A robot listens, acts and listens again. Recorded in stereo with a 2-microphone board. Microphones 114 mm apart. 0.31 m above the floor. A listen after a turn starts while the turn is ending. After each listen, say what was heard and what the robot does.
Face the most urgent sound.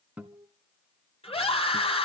The scream: about 60° left or 120° left. Turn 60° left.
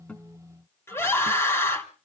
So it is at 25° left. Turn 25° left.
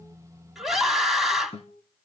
Facing the scream.